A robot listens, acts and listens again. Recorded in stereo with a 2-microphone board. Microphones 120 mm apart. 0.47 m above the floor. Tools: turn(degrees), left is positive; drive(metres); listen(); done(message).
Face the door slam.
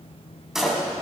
turn(degrees=-30)
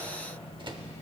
listen()
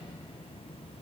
done("I heard a door slam, but can't make it out now. It was about 25° left or 145° right.")